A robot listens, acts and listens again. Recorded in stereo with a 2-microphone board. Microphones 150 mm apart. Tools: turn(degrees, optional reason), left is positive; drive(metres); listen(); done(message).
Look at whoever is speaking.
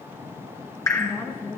turn(degrees=30, reason="The woman speaking: about 30° left or 150° left.")
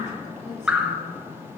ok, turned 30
listen()
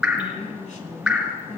turn(degrees=120, reason="So it is at 120° left.")
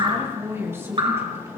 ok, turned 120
turn(degrees=-20, reason="The woman speaking is now 20° right.")
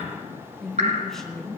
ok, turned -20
done("Found it: a woman speaking, straight ahead.")